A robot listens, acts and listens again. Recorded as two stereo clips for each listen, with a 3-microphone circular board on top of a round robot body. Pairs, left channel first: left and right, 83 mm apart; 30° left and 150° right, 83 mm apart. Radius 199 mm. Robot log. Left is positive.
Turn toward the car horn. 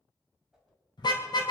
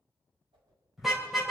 note: The car horn: 120° left.
cmd yaw +120
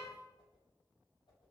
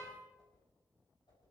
cmd idle
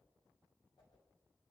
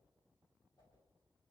cmd idle
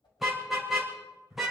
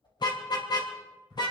end: Found it: a car horn, straight ahead, 2 to 4 m away.